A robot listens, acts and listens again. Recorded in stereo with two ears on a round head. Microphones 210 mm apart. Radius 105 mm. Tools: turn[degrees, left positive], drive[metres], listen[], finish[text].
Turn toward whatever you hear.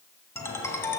Action: turn[30]
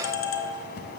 Thought: So it is at 140° left.
Action: turn[140]
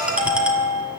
Action: finish[Found it: a ringtone, straight ahead, 1 to 2 m away.]